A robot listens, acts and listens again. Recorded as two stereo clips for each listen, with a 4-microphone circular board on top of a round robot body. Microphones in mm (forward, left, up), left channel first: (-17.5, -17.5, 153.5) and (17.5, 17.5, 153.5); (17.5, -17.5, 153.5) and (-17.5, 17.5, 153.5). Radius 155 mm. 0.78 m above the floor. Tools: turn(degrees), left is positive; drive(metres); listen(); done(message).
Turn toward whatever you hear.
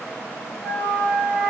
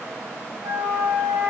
turn(degrees=170)
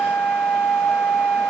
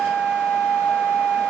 turn(degrees=-50)
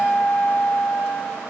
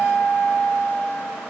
turn(degrees=-10)
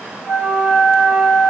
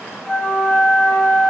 done("Facing the flute, over 4 m away.")